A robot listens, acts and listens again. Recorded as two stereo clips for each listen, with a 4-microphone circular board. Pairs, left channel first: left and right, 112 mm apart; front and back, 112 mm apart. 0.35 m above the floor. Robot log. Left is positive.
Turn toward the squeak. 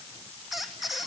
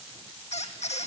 end: Facing the squeak.